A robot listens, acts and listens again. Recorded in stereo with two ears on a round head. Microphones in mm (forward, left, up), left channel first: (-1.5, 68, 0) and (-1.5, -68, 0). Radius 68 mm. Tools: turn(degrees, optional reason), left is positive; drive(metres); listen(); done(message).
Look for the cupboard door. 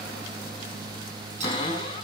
turn(degrees=30, reason="The cupboard door: about 30° left or 150° left.")
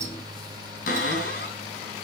turn(degrees=120, reason="So it is at 120° left.")
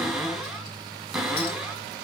done("Found it: a cupboard door, straight ahead, over 4 m away.")